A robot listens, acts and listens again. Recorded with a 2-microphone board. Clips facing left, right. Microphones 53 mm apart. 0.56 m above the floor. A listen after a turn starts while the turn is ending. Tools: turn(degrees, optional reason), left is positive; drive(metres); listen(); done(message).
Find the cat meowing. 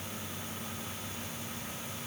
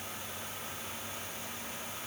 listen()
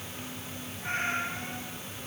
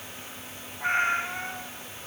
turn(degrees=-90)
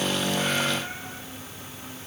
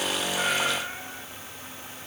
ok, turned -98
turn(degrees=10, reason="Nothing new. It was at 10° left.")
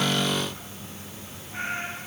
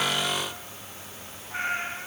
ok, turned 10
turn(degrees=-35, reason="The cat meowing is now 35° right.")
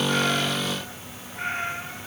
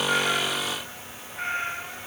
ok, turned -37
done("Facing the cat meowing.")